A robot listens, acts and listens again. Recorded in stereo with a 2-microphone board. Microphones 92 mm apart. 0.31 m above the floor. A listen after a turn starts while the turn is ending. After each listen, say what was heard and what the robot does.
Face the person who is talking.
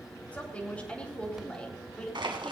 Turn 30° left.
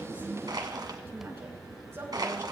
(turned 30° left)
Keep listening.
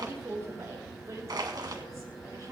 So it is at 35° right. Turn 35° right.
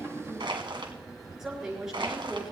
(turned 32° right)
Facing the woman speaking.